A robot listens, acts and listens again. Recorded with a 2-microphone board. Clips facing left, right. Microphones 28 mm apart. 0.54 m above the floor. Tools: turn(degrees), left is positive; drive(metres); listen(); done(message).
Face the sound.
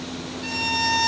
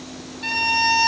turn(degrees=-35)
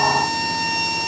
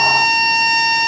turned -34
turn(degrees=-110)
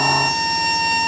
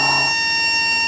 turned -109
done("Facing the violin.")